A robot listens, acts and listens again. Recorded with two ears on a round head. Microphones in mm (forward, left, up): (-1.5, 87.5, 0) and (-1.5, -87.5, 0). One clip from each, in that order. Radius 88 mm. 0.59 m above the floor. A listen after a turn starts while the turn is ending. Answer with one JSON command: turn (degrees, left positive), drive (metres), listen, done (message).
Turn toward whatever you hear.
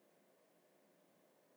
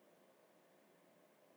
{"listen": true}
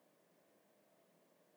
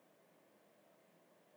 {"listen": true}
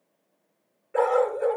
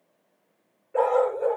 {"turn": 90}
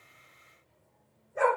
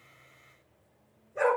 {"turn": -10}
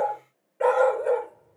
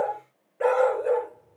{"done": "Facing the dog barking, 2 to 4 m away."}